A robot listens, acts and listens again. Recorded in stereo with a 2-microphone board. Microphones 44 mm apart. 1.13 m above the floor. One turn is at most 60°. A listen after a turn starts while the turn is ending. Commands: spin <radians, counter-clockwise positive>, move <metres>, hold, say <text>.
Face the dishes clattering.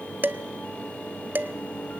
spin -0.87
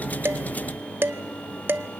spin -1.05
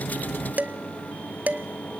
spin -0.79
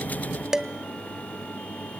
spin -0.26
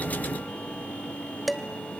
say Facing the dishes clattering.